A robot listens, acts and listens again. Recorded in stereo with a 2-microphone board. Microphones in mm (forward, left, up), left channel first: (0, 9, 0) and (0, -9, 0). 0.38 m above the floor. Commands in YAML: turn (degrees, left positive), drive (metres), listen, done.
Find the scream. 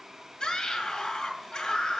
turn: 60
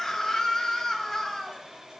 turn: 20
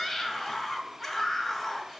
done: "Facing the scream."